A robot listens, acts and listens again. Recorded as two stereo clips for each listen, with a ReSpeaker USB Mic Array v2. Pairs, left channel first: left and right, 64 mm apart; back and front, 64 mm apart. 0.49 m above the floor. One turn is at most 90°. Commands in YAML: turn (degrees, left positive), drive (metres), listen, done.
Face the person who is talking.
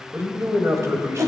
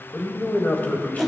turn: -90
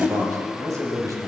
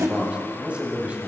turn: -65
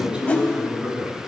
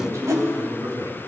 turn: -15
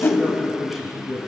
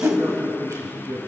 done: "Found it: a man speaking, straight ahead, 2 to 4 m away."